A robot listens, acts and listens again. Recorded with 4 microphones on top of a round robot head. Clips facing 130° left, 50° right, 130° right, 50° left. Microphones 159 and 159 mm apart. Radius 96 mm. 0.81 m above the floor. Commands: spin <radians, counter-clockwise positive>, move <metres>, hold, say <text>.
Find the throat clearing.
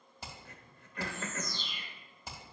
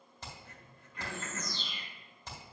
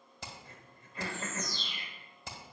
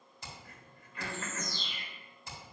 spin 2.88
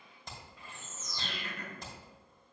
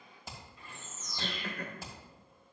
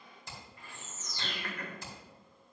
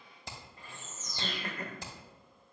spin -0.26
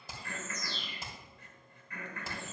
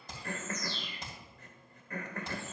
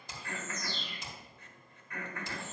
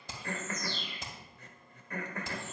say Facing the throat clearing.